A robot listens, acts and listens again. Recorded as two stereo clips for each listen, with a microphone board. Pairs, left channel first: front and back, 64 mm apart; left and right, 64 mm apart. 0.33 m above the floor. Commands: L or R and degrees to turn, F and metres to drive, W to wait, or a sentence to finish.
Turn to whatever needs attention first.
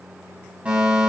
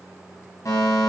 L110
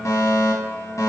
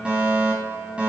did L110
R20
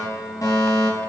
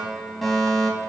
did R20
Found it: a fire alarm, straight ahead, 2 to 4 m away.